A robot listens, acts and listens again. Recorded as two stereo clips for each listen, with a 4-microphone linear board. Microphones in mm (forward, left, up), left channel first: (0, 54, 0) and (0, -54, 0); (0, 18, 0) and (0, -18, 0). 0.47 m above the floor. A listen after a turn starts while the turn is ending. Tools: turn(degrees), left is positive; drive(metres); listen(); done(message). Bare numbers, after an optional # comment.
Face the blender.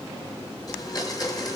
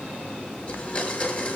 # The blender: about 35° left or 145° left.
turn(35)
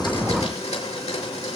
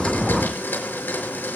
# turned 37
# So it is at 110° left.
turn(110)
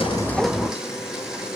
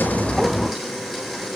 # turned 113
done("Found it: a blender, straight ahead, over 4 m away.")